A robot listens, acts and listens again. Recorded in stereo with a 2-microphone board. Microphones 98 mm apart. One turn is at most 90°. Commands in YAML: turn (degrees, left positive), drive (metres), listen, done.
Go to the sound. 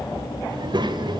turn: -50
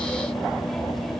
listen: true
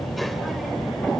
drive: 1.0
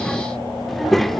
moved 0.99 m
drive: 1.0
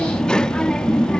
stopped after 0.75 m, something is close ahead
turn: 10
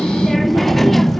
done: "I am next to the child speaking."